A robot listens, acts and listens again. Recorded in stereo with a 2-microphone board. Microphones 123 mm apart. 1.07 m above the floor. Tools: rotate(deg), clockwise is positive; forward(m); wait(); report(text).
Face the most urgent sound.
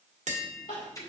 rotate(-90)
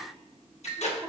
rotate(-15)
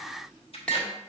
wait()
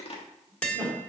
report("Found it: crying, straight ahead.")